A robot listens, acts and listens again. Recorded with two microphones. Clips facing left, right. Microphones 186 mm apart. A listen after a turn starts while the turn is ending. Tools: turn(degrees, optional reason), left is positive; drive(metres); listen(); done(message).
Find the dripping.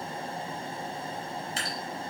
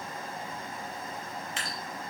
turn(degrees=40, reason="The dripping: about 40° left or 140° left.")
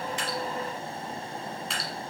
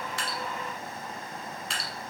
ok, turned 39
done("Facing the dripping.")